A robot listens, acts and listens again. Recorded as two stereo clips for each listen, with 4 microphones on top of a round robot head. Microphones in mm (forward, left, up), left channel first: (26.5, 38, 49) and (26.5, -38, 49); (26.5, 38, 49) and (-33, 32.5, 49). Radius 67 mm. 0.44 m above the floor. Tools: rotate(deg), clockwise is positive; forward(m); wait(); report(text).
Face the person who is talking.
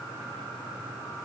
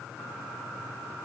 wait()
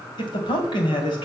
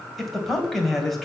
rotate(-95)
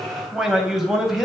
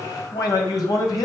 report("Found it: a man speaking, straight ahead, 2 to 4 m away.")